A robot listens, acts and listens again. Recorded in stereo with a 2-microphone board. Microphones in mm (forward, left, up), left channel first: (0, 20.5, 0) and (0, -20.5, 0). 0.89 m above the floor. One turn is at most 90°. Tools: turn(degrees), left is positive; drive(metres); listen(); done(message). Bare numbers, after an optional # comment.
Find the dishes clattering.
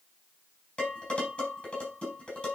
# The dishes clattering: about 20° left or 160° left.
turn(20)
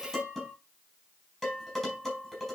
done("Found it: dishes clattering, straight ahead.")